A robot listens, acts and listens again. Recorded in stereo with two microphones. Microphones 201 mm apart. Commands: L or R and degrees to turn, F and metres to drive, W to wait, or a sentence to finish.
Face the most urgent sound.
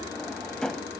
W
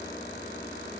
W
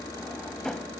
I can't make out anything urgent, only a drawer.